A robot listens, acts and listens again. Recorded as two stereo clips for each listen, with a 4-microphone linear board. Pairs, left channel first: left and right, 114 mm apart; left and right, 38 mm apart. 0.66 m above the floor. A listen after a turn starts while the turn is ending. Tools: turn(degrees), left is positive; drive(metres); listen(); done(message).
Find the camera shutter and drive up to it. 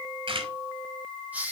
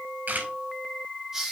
turn(degrees=-55)
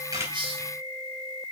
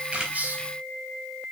listen()
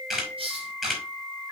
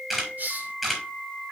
drive(metres=1.0)
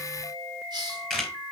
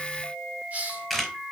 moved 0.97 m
drive(metres=1.0)
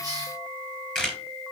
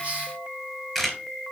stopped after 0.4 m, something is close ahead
done("Blocked. The camera shutter is further on, straight ahead.")